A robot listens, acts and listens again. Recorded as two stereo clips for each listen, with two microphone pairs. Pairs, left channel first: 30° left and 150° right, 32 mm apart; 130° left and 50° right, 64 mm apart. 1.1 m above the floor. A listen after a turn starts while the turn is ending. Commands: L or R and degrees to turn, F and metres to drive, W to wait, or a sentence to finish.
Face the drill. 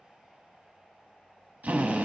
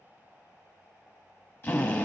L180
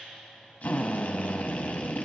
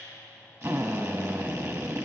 R10
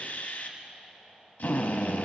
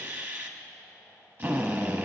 Found it: a drill, straight ahead, 1 to 2 m away.